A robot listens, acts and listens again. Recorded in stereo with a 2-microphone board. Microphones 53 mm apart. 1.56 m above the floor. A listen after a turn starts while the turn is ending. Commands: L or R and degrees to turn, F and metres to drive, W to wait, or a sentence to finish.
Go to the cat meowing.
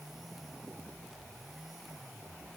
W
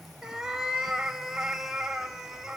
R30
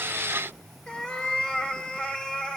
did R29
L20
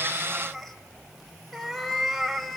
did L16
F1.0
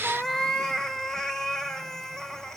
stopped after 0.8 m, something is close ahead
L10
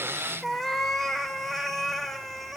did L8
Arrived at the cat meowing, straight ahead.